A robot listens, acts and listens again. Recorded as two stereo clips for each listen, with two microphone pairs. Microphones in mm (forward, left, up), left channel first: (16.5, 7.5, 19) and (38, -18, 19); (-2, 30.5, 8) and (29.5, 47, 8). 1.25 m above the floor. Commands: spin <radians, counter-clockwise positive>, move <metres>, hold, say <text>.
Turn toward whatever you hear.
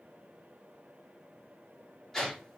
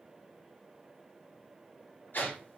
spin -2.62
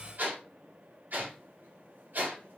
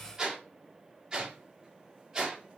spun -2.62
spin -0.61
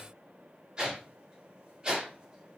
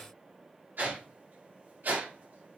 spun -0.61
spin 0.26
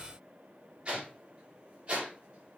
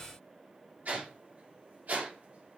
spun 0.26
say Found it: a whoosh, straight ahead, 1 to 2 m away.